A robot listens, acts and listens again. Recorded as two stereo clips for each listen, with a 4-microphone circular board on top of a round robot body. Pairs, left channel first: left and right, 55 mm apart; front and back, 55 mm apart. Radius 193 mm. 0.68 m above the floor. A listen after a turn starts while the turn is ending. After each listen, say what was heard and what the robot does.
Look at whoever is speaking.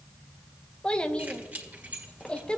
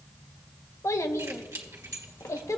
The child speaking: 20° left. Turn 20° left.
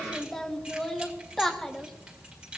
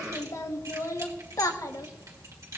Facing the child speaking.